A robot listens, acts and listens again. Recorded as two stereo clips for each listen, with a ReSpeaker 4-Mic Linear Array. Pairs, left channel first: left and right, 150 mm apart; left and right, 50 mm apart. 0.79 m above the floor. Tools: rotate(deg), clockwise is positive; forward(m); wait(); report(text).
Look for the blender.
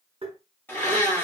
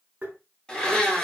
rotate(-30)
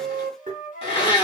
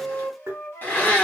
rotate(-135)
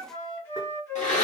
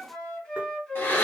rotate(-60)
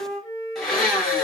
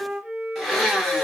report("Facing the blender, 1 to 2 m away.")